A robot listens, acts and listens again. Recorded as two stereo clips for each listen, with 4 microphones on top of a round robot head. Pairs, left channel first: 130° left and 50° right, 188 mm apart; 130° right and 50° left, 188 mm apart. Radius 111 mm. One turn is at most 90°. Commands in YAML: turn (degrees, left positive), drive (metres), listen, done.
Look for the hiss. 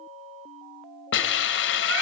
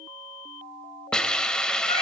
turn: 90
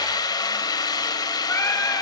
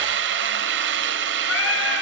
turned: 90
turn: 65
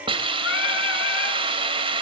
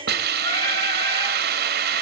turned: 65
turn: 15
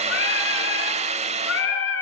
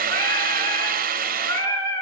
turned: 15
done: "Found it: a hiss, straight ahead, 2 to 4 m away."